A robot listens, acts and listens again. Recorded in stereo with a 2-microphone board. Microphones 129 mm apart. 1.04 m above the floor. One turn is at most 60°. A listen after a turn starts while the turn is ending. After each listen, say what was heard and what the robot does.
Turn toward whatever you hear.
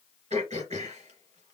The throat clearing: about 65° right or 115° right. Turn 60° right.
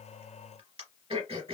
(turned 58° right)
So it is at 50° right. Turn 50° right.
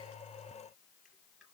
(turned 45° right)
Keep listening.
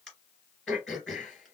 Facing the throat clearing, 2 to 4 m away.